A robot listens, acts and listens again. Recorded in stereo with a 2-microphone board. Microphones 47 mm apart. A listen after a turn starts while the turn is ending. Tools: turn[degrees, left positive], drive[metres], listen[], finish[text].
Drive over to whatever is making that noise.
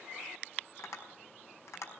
Action: turn[90]
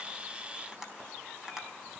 Thought: So it is at 10° right.
Action: turn[-10]
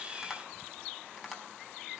Action: drive[1.0]
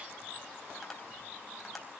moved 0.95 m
Action: drive[1.0]
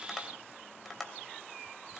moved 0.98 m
Action: drive[1.0]
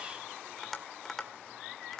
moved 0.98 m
Action: drive[1.0]
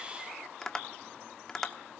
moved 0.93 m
Thought: The tapping is now 15° left.
Action: turn[15]
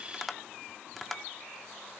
Action: drive[1.0]
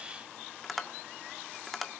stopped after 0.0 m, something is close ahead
Action: finish[I am next to the tapping.]